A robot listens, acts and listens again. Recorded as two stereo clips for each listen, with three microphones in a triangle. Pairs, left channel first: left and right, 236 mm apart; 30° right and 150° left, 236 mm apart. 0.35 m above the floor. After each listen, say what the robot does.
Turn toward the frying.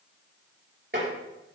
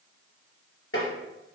Keep listening.
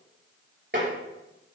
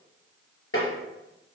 Keep listening.
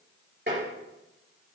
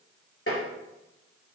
I can't make out frying to turn to.